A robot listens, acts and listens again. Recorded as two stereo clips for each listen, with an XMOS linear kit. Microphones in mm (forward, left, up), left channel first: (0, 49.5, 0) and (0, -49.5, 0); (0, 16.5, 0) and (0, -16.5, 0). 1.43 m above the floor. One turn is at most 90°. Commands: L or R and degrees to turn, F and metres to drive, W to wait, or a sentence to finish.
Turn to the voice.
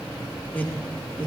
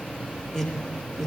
L20
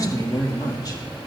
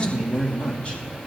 L90
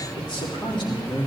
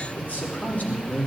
L55
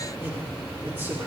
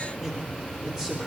W
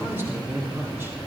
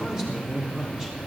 R20
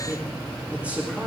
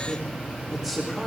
R10
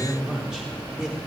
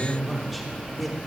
Facing the man speaking, over 4 m away.